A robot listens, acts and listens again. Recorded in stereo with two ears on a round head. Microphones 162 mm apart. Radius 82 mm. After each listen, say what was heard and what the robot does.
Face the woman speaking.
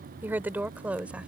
Turn 30° right.
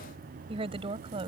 So it is at 150° right. Turn 150° right.
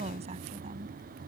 The woman speaking is now 35° right. Turn 35° right.
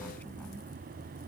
Keep listening.
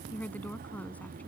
The woman speaking is now 10° left. Turn 10° left.
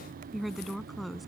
Facing the woman speaking.